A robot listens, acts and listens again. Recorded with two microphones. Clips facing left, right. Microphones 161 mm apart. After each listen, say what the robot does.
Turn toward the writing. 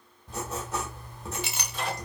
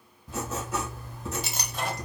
Turn 30° left.
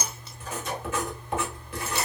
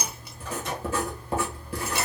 Turn 35° right.
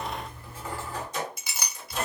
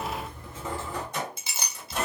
Turn 20° right.
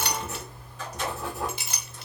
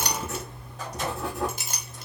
Found it: writing, straight ahead.